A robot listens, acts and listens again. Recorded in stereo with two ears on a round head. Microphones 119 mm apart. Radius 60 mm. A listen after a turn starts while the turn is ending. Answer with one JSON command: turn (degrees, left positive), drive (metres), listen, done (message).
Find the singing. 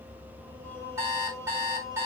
{"turn": 25}
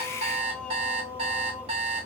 {"turn": 25}
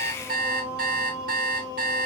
{"turn": 30}
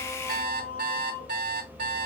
{"turn": 30}
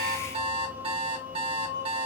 {"turn": -15}
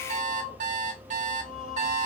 {"done": "Found it: singing, straight ahead."}